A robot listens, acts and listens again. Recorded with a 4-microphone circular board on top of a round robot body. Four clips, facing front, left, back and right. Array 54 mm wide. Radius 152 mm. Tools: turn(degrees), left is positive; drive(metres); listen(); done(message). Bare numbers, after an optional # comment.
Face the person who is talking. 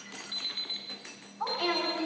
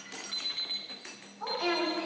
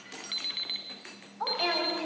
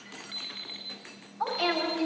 # The woman speaking: 125° right.
turn(-125)
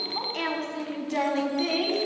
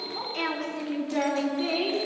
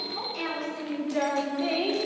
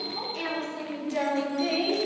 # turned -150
# The woman speaking is now 10° left.
turn(10)
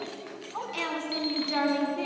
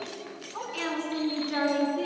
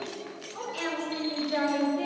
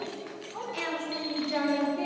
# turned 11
done("Found it: a woman speaking, straight ahead, over 4 m away.")